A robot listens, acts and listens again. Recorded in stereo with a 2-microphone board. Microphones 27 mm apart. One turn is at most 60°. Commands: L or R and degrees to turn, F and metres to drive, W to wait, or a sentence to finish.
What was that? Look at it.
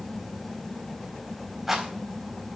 R30
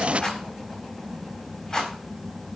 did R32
L20
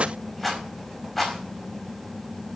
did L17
Found it: a rattle, straight ahead, over 4 m away.